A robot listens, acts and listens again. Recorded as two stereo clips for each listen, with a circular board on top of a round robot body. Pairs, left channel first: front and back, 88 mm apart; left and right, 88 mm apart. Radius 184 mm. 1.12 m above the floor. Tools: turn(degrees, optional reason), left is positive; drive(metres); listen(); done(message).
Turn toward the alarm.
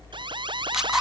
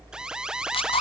turn(degrees=-170, reason="The alarm: 170° right.")
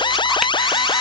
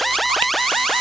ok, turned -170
done("Found it: an alarm, straight ahead.")